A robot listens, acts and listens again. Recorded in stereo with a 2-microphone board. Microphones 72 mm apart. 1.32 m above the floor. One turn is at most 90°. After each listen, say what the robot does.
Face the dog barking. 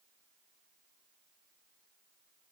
Keep listening.
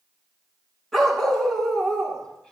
Turn 30° left.
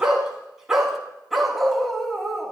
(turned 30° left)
Turn 30° left.
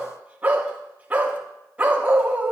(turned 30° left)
Turn 20° right.
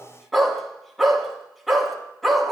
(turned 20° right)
Facing the dog barking.